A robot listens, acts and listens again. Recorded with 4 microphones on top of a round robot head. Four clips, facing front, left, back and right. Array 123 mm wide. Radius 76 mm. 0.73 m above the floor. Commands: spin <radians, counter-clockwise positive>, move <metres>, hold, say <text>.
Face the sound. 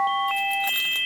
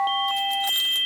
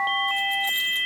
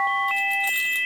spin 0.17
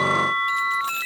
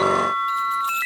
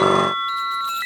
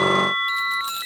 spin -0.17
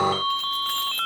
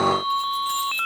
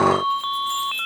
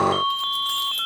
spin -0.26
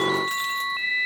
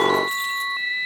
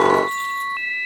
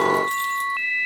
spin -0.17
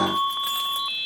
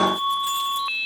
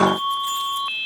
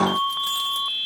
spin -0.26
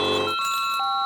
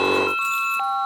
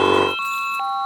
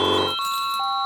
spin -0.17
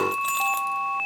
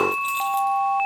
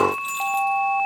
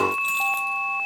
say Found it: keys jangling, straight ahead.